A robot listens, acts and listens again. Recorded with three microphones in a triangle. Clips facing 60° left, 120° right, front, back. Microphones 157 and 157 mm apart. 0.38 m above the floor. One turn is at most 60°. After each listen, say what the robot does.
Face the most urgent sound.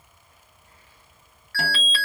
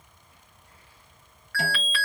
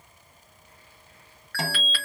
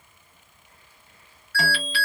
Found it: an alarm, straight ahead.